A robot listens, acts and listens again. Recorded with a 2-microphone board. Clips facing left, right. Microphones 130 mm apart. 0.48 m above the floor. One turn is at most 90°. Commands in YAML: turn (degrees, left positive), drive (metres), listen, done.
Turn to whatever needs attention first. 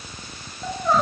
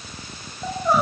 turn: -30
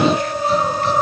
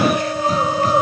turn: -90
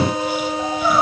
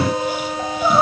turn: -25
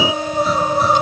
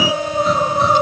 done: "Facing the crying."